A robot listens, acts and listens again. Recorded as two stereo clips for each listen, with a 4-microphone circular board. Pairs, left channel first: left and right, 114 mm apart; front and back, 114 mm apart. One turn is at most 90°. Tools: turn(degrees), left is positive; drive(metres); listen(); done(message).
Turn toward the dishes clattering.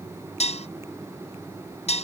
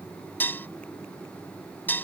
turn(degrees=75)
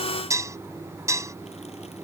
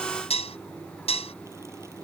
turn(degrees=-30)
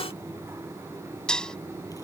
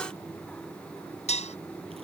done("Found it: dishes clattering, straight ahead.")